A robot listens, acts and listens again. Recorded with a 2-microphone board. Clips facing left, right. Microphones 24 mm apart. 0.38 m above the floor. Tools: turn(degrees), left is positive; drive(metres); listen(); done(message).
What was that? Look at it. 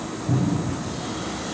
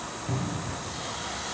turn(degrees=-45)
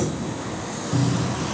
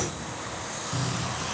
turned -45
done("Facing the cupboard door, 2 to 4 m away.")